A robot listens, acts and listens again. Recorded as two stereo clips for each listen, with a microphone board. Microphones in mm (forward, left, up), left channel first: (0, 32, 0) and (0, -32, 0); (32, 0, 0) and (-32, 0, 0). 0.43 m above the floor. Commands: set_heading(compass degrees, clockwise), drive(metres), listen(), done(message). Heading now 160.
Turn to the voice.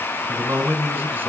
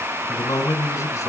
set_heading(190)
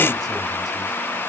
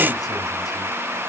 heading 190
listen()
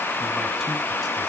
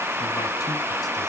listen()
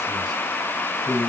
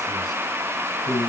done("Facing the man speaking, 2 to 4 m away.")